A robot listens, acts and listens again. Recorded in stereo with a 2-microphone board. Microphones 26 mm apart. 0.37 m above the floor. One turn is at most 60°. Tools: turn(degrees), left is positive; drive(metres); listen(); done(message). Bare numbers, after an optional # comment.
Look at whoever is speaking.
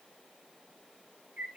listen()
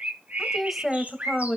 turn(30)
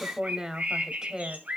# So it is at 30° right.
turn(-30)
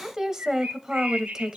# The woman speaking is now 20° right.
turn(-20)
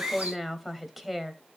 done("Found it: a woman speaking, straight ahead, 1 to 2 m away.")